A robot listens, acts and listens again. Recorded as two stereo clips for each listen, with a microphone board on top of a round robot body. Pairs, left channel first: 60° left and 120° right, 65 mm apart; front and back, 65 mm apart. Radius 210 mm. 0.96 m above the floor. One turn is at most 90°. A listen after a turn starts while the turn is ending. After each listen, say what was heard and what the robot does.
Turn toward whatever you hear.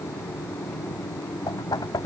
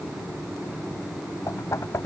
The knocking: 45° left. Turn 45° left.
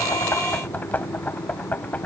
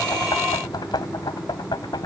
The knocking is now 10° right. Turn 10° right.
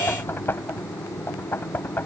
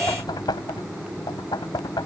Facing the knocking.